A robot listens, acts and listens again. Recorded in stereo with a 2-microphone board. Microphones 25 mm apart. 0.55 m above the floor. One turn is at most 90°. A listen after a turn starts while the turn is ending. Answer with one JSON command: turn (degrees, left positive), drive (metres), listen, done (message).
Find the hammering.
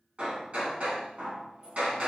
{"turn": -55}
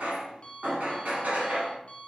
{"turn": -65}
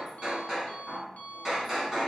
{"turn": -15}
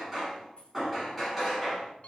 {"done": "Facing the hammering, 2 to 4 m away."}